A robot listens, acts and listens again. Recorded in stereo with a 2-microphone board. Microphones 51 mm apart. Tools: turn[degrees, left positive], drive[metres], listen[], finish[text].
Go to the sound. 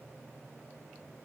Action: listen[]
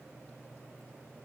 Action: listen[]
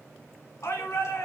Thought: The shout: about 65° left or 115° left.
Action: turn[65]
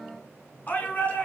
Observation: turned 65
Thought: So it is at 35° left.
Action: turn[35]
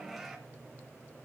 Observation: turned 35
Action: drive[1.0]
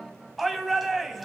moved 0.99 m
Action: drive[1.0]
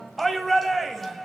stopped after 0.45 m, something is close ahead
Action: finish[Arrived at the shout, straight ahead.]